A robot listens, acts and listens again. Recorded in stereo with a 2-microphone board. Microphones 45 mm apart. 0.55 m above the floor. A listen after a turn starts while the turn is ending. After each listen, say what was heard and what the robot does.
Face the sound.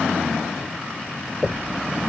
Turn 30° left.
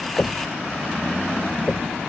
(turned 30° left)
So it is at 150° left. Turn 150° left.
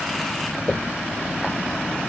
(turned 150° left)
The knocking is now 20° left. Turn 20° left.
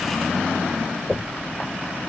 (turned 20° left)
Facing the knocking.